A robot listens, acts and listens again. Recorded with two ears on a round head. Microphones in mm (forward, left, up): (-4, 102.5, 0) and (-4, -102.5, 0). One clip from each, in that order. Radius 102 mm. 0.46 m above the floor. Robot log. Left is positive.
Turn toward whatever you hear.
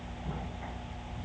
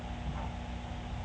cmd idle
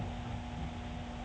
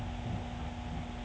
cmd idle
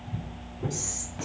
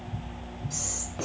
cmd yaw -30
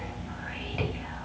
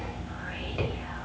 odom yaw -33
cmd idle
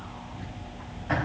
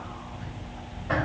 note: So it is at 15° left.
cmd yaw +15
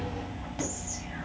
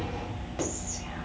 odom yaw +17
end: Found it: whispering, straight ahead.